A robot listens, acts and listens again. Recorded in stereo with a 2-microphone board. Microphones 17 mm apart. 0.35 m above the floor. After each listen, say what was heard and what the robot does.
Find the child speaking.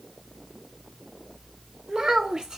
The child speaking: about 45° right or 135° right. Turn 45° right.
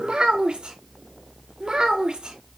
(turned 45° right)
So it is at 115° right. Turn 115° right.
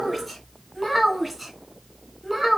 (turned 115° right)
Facing the child speaking.